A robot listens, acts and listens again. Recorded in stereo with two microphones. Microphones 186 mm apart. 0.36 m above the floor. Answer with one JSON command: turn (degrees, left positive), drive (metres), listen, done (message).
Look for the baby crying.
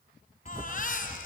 {"turn": 45}
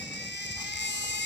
{"turn": 90}
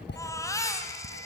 {"turn": 20}
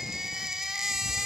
{"done": "Found it: a baby crying, straight ahead, 2 to 4 m away."}